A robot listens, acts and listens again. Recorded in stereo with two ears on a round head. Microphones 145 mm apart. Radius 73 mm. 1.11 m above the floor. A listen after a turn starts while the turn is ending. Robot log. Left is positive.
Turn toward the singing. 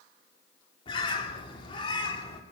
cmd idle
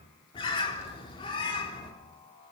note: The singing: about 30° left or 150° left.
cmd yaw +30
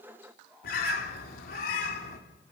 end: Found it: singing, straight ahead, over 4 m away.